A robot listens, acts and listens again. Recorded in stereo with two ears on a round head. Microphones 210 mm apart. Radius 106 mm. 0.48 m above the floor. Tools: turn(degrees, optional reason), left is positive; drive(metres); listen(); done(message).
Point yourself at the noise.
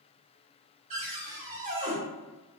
turn(degrees=-30, reason="The cupboard door: about 30° right or 150° right.")
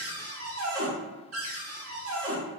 turn(degrees=-115, reason="So it is at 115° right.")
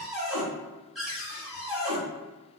done("Facing the cupboard door, 1 to 2 m away.")